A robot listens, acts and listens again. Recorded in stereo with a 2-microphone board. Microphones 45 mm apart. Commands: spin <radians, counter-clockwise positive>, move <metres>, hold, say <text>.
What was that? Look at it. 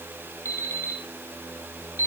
spin 1.22
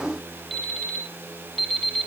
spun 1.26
say Facing the alarm clock.